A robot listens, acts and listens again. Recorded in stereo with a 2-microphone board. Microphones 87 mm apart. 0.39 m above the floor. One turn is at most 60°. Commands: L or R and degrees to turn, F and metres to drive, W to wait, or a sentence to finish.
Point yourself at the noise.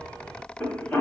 L20
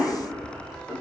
Facing the cough.